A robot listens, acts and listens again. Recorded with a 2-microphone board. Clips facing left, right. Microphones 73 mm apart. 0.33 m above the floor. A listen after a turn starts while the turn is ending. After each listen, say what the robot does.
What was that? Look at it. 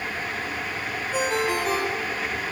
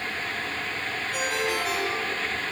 Turn 45° left.
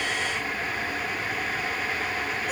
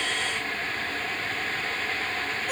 Keep listening.
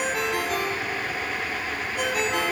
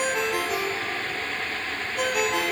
Found it: a ringtone, straight ahead, over 4 m away.